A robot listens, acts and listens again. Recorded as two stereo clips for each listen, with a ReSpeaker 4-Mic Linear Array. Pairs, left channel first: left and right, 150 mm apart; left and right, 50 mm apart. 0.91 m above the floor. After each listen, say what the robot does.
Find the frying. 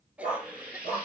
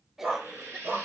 Turn 90° right.
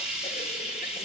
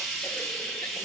Facing the frying.